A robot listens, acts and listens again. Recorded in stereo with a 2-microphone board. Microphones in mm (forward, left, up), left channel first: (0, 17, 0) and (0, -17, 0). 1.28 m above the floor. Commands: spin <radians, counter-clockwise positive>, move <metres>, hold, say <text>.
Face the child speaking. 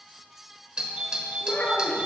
spin 0.79
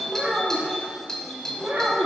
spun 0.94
spin -0.61
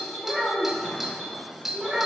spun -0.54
spin -0.35
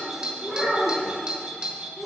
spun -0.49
say Facing the child speaking, 2 to 4 m away.